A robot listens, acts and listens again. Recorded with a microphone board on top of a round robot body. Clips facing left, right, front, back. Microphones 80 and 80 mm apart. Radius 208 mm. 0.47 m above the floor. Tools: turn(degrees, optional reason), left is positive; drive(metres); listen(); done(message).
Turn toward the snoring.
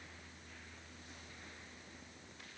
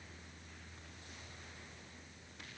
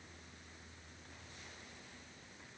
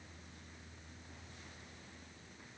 listen()
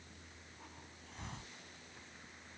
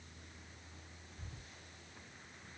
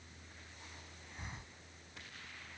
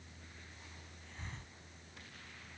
listen()
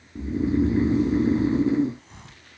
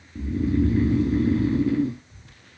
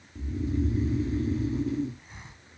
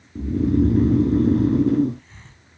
turn(degrees=160, reason="The snoring: 160° left.")
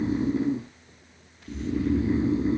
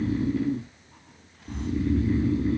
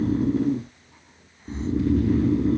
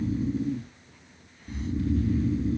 turn(degrees=25, reason="The snoring is now 25° left.")
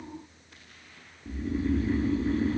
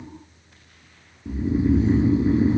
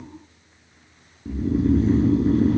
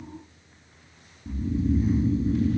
turn(degrees=-20, reason="The snoring is now 20° right.")
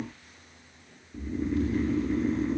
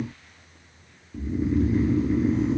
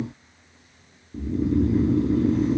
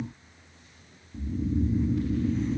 done("Facing the snoring.")